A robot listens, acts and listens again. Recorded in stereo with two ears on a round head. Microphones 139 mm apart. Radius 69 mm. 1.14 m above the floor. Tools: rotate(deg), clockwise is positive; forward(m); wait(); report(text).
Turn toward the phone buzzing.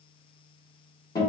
wait()
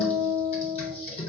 wait()
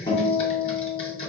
report("I can't make out a phone buzzing, only a guitar and typing on a keyboard.")